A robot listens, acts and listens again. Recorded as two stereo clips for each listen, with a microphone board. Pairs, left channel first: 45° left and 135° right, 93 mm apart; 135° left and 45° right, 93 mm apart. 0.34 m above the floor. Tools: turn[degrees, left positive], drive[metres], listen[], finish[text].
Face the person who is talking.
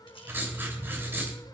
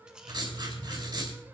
Action: listen[]
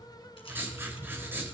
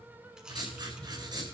Action: listen[]
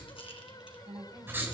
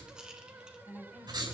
Thought: The woman speaking: 140° right.
Action: turn[-140]
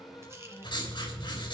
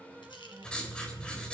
Action: listen[]
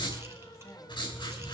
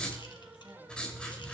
Action: listen[]
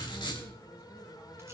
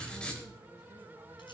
Action: finish[I heard a woman speaking from this way, but can't make it out now.]